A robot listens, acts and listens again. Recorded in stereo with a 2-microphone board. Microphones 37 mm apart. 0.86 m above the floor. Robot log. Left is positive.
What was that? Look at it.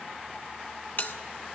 note: The bell: about 55° left or 125° left.
cmd yaw +55
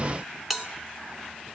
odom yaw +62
end: Facing the bell, 2 to 4 m away.